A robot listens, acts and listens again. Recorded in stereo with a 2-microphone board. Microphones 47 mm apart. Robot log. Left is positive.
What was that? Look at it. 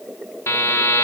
cmd yaw +90
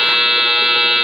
end: Facing the buzzer, 1 to 2 m away.